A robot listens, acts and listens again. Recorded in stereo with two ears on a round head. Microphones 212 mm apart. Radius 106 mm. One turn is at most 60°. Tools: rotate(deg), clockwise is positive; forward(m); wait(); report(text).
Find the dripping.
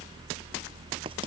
wait()
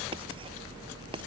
wait()
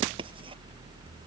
report("I can't make out dripping.")